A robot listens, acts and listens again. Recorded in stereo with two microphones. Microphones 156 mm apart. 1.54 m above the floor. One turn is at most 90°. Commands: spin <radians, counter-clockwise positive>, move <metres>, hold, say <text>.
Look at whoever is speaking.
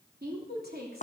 spin -1.57
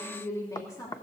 spin 0.44
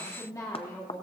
spin 0.52
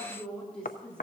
spin 0.17
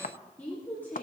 spin 0.26
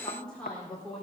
say Found it: a woman speaking, straight ahead, 2 to 4 m away.